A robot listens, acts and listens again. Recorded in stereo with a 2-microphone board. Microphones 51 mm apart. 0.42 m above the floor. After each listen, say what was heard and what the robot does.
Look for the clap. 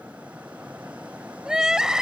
Keep listening.
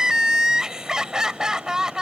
Keep listening.
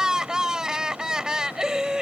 I can't make out a clap, only crying.